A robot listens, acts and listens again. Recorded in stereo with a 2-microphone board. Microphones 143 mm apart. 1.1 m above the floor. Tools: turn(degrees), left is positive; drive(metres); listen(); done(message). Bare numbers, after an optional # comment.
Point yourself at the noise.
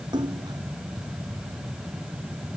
# The splash: about 30° right or 150° right.
turn(-30)
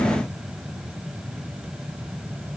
listen()
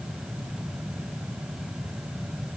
done("I heard a splash, but can't make it out now. It was about straight ahead or 120° right.")